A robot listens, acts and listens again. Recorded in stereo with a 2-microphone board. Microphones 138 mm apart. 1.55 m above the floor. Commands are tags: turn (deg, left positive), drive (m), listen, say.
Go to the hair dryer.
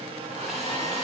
<turn deg="-50"/>
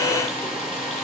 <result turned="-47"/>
<drive m="1.0"/>
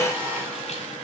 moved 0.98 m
<turn deg="-15"/>
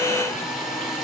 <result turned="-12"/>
<drive m="1.0"/>
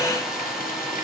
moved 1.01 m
<drive m="1.0"/>
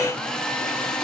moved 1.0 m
<drive m="1.0"/>
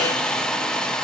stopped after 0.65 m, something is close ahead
<say>I am next to the hair dryer.</say>